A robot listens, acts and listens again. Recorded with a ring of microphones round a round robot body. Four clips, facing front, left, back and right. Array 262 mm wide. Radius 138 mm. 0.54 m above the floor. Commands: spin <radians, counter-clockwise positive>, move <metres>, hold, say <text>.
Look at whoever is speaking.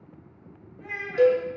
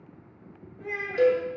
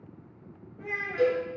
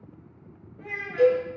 spin -2.53
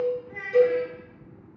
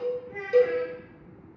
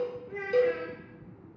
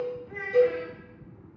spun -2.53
spin -1.05
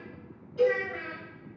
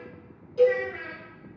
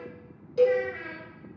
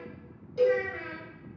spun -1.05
say Facing the child speaking.